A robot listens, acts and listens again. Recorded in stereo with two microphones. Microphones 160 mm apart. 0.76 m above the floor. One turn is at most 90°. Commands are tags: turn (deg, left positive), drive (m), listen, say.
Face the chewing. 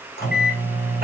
<listen/>
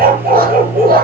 <listen/>
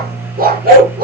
<say>I can't make out chewing to turn to.</say>